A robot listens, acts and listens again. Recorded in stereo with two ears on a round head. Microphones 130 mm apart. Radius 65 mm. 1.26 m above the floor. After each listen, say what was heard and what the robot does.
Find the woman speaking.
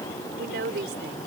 The woman speaking: about 75° right or 105° right. Turn 75° right.
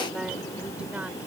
Keep listening.
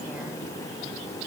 Keep listening.
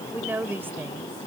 So it is at 15° right. Turn 15° right.
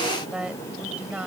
The woman speaking is now 10° right. Turn 10° right.
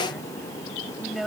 Found it: a woman speaking, straight ahead.